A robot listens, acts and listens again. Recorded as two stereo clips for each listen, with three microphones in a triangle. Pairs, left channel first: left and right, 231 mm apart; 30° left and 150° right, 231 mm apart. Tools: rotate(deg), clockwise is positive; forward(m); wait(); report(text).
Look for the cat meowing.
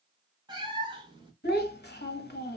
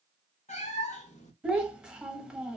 rotate(25)
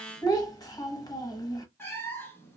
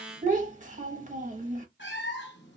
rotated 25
rotate(-10)
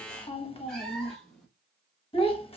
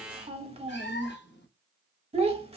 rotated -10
report("Facing the cat meowing.")